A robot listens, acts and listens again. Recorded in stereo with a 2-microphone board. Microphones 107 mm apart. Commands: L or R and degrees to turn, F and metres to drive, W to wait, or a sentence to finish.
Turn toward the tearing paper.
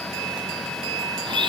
W
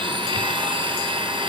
W
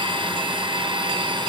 I can't make out tearing paper to turn to.